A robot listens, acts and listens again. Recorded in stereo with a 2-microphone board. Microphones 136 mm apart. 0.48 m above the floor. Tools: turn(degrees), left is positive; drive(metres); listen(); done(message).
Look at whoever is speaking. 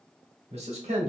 turn(degrees=-50)
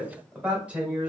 turn(degrees=-10)
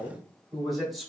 done("Facing the man speaking.")